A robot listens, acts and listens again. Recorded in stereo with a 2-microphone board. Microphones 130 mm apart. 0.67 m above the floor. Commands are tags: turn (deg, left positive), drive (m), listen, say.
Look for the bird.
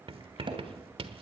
<listen/>
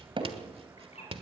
<turn deg="55"/>
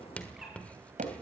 <listen/>
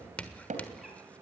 <listen/>
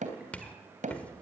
<say>I heard a bird, but can't make it out now. It was about straight ahead or 70° left.</say>